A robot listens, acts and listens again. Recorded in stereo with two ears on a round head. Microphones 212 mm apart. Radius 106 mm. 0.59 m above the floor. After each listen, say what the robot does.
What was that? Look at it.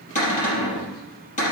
Turn 35° left.
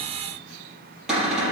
Found it: a cupboard door, straight ahead, over 4 m away.